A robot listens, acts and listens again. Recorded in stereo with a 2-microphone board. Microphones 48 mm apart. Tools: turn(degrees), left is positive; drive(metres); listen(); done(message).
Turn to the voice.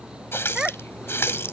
turn(degrees=-30)
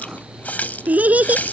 turn(degrees=-145)
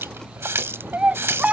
turn(degrees=-25)
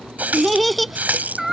done("Found it: a child speaking, straight ahead.")